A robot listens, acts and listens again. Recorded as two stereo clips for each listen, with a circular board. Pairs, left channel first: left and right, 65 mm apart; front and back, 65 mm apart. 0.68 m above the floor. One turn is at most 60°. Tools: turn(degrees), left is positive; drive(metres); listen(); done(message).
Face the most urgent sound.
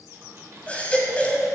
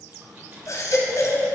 turn(degrees=20)
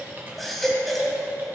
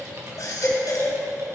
done("Found it: a baby crying, straight ahead.")